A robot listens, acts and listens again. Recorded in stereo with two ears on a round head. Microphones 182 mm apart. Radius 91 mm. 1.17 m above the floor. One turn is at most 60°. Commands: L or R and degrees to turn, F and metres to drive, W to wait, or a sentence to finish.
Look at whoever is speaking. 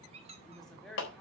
L30
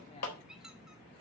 W
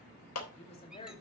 L60
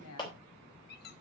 L60
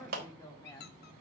L15
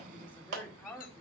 L10
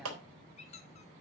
W
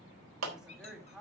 Found it: a woman speaking, straight ahead, 2 to 4 m away.